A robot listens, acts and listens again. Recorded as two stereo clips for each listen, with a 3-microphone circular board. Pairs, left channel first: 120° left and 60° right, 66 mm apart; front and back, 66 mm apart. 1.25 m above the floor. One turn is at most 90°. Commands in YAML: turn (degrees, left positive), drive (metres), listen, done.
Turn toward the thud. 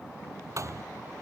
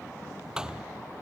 turn: -90
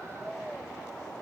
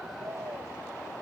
turn: -10
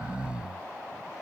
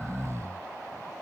done: "I heard a thud from this way, but can't make it out now."